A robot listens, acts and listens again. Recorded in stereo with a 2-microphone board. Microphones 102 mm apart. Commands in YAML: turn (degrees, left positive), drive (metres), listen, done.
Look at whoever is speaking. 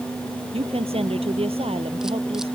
turn: -70
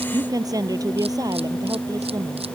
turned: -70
turn: -35
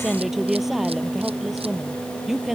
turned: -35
done: "Facing the woman speaking."